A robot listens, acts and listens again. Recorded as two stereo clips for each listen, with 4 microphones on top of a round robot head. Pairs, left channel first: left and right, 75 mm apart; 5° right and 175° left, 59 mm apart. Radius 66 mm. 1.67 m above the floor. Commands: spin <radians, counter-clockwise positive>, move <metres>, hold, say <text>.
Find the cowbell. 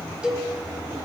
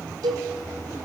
spin -2.97
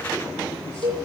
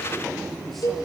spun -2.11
spin -0.79
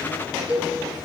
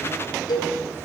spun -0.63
spin -0.17
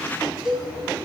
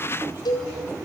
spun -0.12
say Found it: a cowbell, straight ahead, over 4 m away.